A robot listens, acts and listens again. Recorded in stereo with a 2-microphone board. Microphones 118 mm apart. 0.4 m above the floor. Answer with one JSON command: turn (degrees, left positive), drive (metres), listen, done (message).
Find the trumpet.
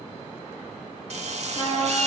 {"turn": 45}
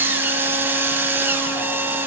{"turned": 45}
{"listen": true}
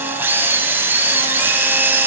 {"listen": true}
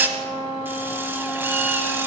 {"turn": 90}
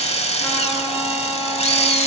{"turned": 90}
{"listen": true}
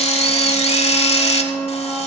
{"turn": 15}
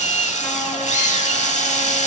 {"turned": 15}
{"listen": true}
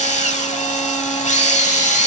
{"listen": true}
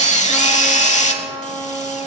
{"done": "Found it: a trumpet, straight ahead."}